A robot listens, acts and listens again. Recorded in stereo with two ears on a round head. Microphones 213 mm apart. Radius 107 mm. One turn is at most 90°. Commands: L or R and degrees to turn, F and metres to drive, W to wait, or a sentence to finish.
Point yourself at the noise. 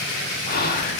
L40
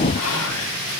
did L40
L90
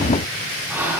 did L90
R10
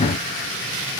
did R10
W
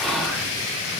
Found it: whispering, straight ahead, 1 to 2 m away.